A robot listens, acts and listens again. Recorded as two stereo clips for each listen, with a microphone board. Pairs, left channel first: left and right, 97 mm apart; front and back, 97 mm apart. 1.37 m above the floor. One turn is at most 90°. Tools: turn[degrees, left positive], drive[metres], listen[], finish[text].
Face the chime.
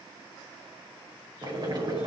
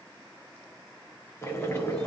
Action: listen[]
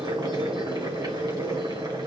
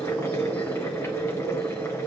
Action: listen[]
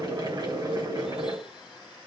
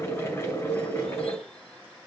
Action: finish[I can't make out a chime, only boiling.]